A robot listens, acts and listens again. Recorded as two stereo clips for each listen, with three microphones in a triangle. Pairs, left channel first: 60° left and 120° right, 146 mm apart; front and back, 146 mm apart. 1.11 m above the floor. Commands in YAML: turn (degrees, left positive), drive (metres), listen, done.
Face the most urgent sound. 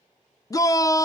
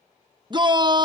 turn: 125
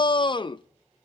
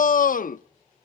done: "Facing the shout."